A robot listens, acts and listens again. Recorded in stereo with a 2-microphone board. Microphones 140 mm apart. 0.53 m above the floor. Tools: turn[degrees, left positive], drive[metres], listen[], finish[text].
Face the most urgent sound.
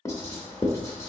Action: listen[]
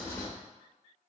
Action: listen[]
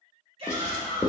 Thought: The shout: about 45° right or 135° right.
Action: turn[-45]
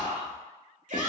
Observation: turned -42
Thought: So it is at 85° right.
Action: turn[-85]
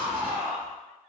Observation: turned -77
Thought: The shout is now 10° right.
Action: turn[-10]
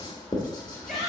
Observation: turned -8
Action: finish[Found it: a shout, straight ahead, 1 to 2 m away.]